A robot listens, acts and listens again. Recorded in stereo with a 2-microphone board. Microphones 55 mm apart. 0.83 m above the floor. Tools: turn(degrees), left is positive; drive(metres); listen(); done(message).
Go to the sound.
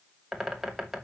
turn(degrees=-30)
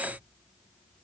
listen()
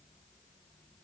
listen()
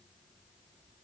done("I heard a bird, but can't make it out now. It was about 25° left or 145° right. I did not reach it.")